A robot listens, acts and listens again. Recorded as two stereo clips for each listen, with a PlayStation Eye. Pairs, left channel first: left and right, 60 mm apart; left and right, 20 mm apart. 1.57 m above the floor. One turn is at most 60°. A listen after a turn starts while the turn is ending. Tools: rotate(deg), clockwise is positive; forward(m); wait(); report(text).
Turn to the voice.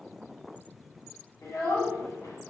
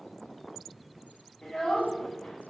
rotate(-60)
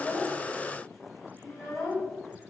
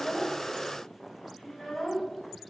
rotate(-50)
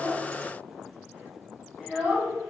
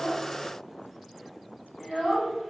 report("Found it: a child speaking, straight ahead, 2 to 4 m away.")